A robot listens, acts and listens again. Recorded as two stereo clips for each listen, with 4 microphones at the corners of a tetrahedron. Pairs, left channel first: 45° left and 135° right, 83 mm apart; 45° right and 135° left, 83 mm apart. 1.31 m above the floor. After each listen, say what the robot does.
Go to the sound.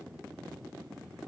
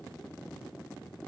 Keep listening.
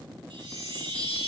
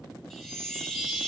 Turn 130° right.
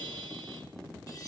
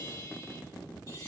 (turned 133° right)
Drive 1.0 m forward.
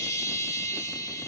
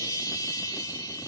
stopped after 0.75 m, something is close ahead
Blocked. The chime is further on, straight ahead.